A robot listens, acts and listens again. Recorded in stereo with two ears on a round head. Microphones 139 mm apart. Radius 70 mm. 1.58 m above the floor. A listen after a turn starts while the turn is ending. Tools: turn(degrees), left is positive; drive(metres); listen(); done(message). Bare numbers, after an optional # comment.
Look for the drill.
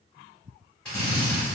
turn(30)
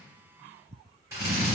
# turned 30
# So it is at 20° right.
turn(-20)
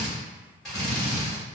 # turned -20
done("Facing the drill.")